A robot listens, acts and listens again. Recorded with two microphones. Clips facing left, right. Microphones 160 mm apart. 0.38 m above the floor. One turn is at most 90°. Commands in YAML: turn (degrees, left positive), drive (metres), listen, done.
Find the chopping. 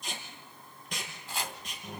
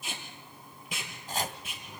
turn: -45
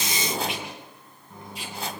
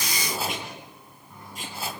done: "Facing the chopping."